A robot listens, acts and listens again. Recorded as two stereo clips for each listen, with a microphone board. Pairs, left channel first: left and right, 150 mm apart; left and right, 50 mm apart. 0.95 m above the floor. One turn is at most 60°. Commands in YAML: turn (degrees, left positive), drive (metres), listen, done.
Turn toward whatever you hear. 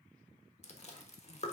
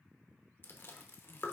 turn: 45
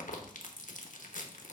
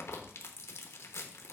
turn: 60
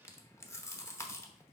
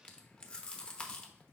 turn: 20
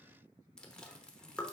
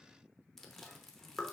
done: "Found it: chewing, straight ahead, under 1 m away."